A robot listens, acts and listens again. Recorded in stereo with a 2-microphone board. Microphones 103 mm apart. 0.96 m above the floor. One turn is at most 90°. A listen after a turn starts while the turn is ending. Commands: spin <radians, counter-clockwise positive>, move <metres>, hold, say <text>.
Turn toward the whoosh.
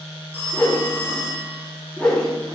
spin 0.52
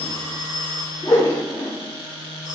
spin 1.57
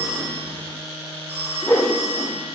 spin 0.52
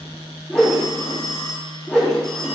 say Found it: a whoosh, straight ahead, 2 to 4 m away.